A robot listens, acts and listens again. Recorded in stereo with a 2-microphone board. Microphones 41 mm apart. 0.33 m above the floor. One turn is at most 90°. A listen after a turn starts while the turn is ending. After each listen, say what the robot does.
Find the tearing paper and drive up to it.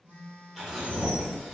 Turn 30° left.
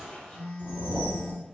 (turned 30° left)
Turn 90° left.
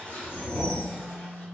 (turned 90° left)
Turn 65° left.
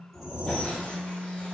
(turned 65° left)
Keep listening.
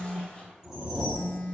Turn 25° left.
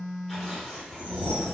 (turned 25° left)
Drive 1.0 m forward.
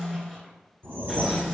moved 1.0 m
Keep listening.
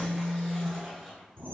Drive 1.0 m forward.
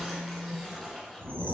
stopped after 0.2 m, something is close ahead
I am next to the tearing paper.